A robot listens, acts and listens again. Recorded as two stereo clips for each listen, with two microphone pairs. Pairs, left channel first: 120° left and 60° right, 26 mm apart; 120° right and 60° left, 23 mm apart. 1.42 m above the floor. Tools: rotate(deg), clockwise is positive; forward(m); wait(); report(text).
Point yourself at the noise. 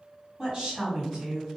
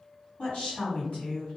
rotate(120)
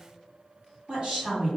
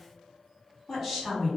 rotate(20)
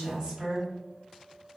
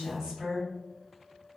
report("Facing the woman speaking, 1 to 2 m away.")